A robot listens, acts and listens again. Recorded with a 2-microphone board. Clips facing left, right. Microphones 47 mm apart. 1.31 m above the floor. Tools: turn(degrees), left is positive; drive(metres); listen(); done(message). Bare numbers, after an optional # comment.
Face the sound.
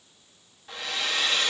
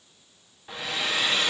turn(-30)
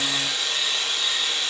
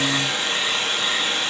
# So it is at 135° right.
turn(-135)
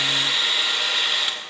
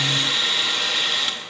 # The hair dryer is now 10° left.
turn(10)
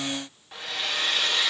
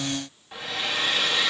done("Found it: a hair dryer, straight ahead.")